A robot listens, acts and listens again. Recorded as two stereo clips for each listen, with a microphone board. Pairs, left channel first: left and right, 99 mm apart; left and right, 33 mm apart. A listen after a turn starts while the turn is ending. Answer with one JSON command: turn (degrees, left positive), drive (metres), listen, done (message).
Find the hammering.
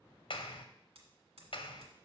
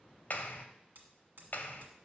{"turn": -90}
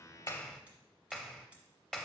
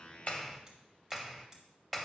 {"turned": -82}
{"turn": -10}
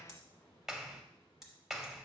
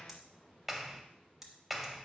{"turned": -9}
{"done": "Facing the hammering."}